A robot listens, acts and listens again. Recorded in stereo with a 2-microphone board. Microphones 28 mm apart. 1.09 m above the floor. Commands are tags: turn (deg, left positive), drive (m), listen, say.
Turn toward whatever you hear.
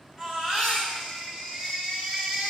<turn deg="-15"/>
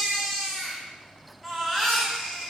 <say>Found it: a baby crying, straight ahead, over 4 m away.</say>